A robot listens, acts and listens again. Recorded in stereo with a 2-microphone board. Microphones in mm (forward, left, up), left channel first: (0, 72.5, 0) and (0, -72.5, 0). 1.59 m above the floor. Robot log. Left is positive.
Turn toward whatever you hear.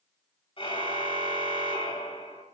note: The car horn: about 35° left or 145° left.
cmd yaw +35
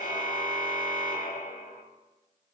note: So it is at 105° left.
cmd yaw +105
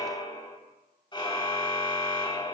note: The car horn is now 30° left.
cmd yaw +30
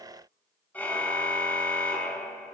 note: The car horn is now 10° left.
cmd yaw +10
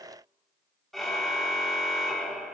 end: Facing the car horn, 2 to 4 m away.